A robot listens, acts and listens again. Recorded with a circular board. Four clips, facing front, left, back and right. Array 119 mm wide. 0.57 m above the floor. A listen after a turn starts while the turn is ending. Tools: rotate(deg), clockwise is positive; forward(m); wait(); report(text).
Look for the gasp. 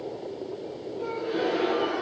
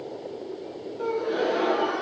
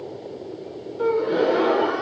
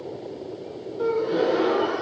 rotate(170)
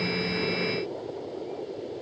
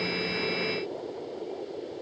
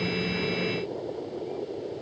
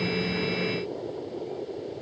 report("Facing where the gasp came from. I can't hear it now.")